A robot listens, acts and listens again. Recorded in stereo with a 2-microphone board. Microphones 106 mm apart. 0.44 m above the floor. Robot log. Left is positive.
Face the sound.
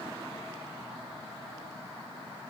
cmd idle
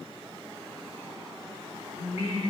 cmd yaw +90
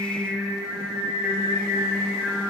end: Facing the singing, over 4 m away.